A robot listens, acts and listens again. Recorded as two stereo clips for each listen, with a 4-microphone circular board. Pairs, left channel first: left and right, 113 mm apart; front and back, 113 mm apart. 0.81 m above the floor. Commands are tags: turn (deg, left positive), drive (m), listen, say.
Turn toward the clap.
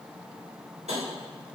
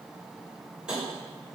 <listen/>
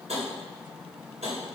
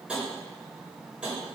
<listen/>
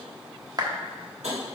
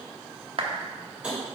<turn deg="-145"/>
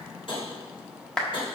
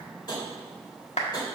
<say>Found it: a clap, straight ahead, 1 to 2 m away.</say>